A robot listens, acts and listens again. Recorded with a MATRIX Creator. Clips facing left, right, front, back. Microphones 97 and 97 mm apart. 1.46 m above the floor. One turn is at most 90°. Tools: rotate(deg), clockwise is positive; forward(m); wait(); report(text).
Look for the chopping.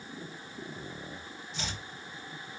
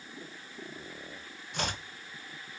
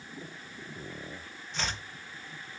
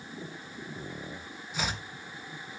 rotate(90)
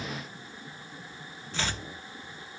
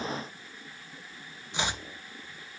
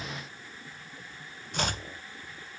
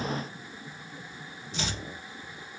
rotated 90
rotate(20)
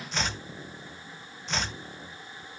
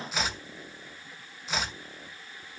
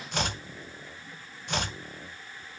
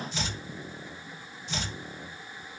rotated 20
report("Facing the chopping.")